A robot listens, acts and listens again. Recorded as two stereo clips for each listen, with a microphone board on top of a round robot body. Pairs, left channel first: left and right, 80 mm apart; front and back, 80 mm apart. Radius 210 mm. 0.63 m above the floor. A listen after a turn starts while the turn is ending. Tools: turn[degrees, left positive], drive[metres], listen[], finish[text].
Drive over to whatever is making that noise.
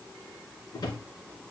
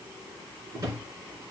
Thought: The drawer: 130° left.
Action: turn[130]
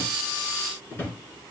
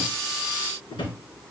Thought: The drawer is now 25° left.
Action: turn[25]
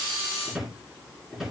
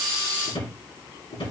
Action: drive[1.0]
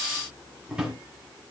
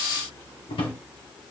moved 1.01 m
Thought: The drawer is now 10° right.
Action: turn[-10]
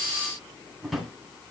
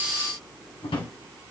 Action: drive[1.0]
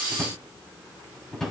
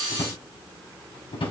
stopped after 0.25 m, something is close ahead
Action: finish[Arrived at the drawer, straight ahead.]